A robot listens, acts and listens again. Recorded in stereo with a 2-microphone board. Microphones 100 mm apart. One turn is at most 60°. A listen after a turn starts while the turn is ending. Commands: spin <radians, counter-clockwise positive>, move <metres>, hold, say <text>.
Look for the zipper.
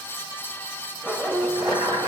spin -0.35
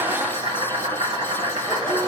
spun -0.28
hold
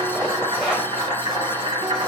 hold
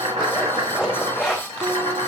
say Facing the zipper, 2 to 4 m away.